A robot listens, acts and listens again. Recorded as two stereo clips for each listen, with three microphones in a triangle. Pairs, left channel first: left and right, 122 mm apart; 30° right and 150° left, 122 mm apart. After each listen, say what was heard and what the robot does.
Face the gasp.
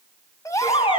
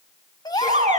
The gasp: 25° left. Turn 25° left.
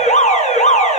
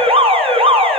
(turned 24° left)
Facing where the gasp came from. I can't hear it now.